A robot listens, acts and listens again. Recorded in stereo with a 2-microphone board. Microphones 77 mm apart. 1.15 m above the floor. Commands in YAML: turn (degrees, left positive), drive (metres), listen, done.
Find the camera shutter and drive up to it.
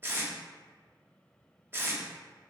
listen: true
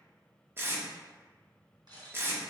turn: -65
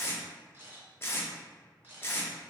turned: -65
turn: -30
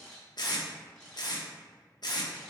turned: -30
drive: 1.0
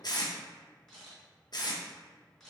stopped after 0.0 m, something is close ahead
done: "Something is in my way. I am facing the camera shutter but have not reached it."